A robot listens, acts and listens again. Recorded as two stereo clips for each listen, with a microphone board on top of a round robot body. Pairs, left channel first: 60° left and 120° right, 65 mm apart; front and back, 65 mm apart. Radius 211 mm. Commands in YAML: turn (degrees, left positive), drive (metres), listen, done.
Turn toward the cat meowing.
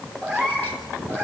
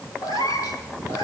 turn: -10
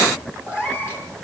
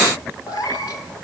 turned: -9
done: "Facing the cat meowing."